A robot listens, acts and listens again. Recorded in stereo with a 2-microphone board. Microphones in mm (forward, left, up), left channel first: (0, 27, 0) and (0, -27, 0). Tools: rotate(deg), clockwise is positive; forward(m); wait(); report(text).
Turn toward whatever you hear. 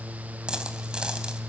rotate(30)
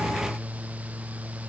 wait()
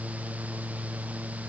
report("I heard a dropped coin, but can't make it out now. It was about 15° left or 135° right.")